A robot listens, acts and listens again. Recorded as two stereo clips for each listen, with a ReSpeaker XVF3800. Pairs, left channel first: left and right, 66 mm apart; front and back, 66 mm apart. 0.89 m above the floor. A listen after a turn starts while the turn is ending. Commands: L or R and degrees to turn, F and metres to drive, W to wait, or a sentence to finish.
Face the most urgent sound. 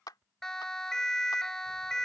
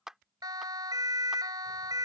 L170
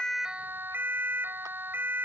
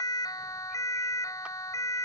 R30
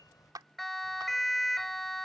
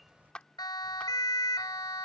Facing the siren.